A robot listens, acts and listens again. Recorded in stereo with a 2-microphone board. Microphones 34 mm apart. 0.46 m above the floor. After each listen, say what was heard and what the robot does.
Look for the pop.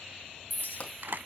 The pop: about 40° left or 140° left. Turn 40° left.
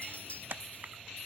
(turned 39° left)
Keep listening.
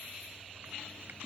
I heard a pop, but can't make it out now. It was about 5° left or 100° left.